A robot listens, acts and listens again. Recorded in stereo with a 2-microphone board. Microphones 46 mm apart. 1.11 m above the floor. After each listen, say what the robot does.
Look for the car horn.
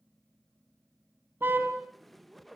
Turn 50° right.
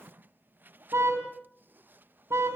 Turn 80° right.
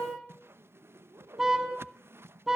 Turn 10° right.
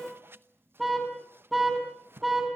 Facing the car horn, over 4 m away.